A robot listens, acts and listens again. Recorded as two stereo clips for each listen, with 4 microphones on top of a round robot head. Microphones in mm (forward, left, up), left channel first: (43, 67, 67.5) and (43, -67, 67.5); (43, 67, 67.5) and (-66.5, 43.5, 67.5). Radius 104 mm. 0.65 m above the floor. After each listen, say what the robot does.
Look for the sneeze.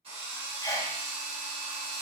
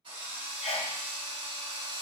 Turn 30° left.
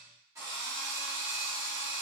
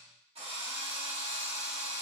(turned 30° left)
Facing where the sneeze came from. I can't hear it now.